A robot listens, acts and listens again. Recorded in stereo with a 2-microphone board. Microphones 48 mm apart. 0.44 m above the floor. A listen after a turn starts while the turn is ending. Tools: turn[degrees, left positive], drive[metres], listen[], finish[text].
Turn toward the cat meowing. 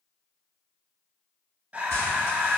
Action: listen[]
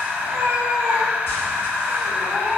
Thought: The cat meowing: about 55° right or 125° right.
Action: turn[-55]
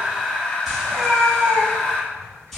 Thought: So it is at 80° right.
Action: turn[-80]
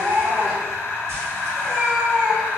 Thought: The cat meowing is now 25° right.
Action: turn[-25]
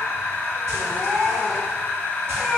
Action: finish[Found it: a cat meowing, straight ahead, 1 to 2 m away.]